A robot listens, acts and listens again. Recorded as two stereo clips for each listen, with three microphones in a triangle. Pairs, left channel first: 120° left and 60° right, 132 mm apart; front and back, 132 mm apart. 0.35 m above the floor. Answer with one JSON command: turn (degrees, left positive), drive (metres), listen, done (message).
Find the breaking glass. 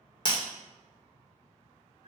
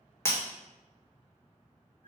{"turn": 70}
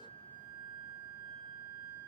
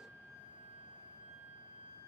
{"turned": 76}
{"turn": -10}
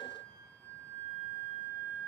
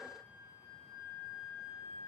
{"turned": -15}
{"done": "I heard breaking glass from this way, but can't make it out now."}